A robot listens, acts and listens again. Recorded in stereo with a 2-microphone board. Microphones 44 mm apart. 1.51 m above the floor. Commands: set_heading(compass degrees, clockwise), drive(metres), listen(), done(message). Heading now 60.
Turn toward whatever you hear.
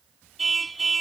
set_heading(30)
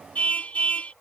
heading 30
set_heading(240)
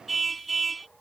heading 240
done("Facing the car horn.")